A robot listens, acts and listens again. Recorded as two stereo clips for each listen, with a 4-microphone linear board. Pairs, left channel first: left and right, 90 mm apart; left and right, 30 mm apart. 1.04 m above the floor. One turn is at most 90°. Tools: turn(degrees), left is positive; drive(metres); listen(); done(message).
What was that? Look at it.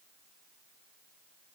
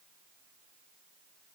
listen()
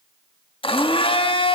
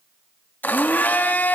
turn(degrees=90)
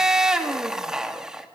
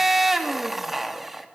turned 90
done("Found it: a blender, straight ahead.")